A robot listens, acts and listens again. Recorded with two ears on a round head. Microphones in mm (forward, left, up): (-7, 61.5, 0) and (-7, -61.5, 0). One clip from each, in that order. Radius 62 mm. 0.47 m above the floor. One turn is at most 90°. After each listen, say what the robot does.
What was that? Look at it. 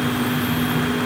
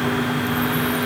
Keep listening.
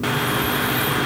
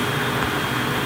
Keep listening.
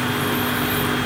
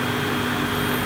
I can't make out anything.